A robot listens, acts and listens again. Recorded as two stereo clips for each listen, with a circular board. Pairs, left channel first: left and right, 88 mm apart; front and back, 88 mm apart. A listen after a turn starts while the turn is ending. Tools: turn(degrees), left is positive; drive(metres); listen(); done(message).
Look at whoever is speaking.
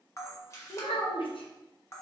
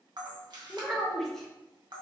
turn(degrees=85)
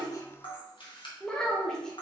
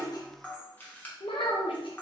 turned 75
turn(degrees=10)
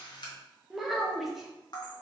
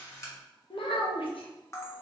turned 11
done("Facing the child speaking, under 1 m away.")